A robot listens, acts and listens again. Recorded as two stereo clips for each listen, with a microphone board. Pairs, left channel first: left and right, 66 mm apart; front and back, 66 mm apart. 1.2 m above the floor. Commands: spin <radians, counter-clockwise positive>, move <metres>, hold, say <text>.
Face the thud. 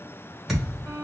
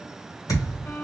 say Found it: a thud, straight ahead, 1 to 2 m away.